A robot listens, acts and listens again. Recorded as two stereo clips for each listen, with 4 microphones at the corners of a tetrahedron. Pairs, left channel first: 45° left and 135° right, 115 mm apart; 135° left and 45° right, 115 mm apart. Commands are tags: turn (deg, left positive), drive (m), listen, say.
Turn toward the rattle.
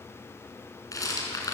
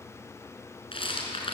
<turn deg="105"/>
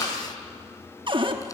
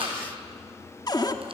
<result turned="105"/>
<turn deg="-15"/>
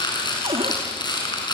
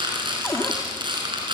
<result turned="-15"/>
<say>Facing the rattle, over 4 m away.</say>